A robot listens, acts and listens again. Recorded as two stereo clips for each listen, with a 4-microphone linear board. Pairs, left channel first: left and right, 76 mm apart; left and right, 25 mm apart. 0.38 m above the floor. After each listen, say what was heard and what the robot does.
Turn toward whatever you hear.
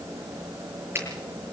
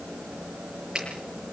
The finger snap: about 30° right or 150° right. Turn 30° right.
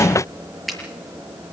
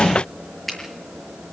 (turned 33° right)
Facing the finger snap.